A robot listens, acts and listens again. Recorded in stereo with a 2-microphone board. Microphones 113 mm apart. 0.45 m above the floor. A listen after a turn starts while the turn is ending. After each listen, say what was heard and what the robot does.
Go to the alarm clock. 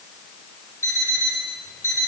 The alarm clock: about 25° left or 155° left. Turn 25° left.
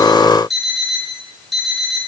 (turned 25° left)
Drive 1.0 m forward.
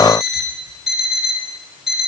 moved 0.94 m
Drive 1.0 m forward.
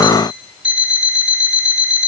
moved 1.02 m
The alarm clock is now 10° right. Turn 10° right.
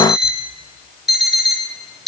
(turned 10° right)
Drive 1.0 m forward.
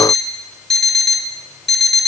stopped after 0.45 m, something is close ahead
I am next to the alarm clock.